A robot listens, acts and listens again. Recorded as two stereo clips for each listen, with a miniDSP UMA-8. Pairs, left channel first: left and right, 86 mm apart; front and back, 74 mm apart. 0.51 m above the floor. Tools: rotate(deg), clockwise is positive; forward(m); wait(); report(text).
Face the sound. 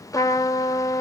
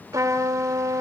rotate(-140)
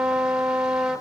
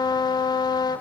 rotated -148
report("Found it: a trumpet, straight ahead.")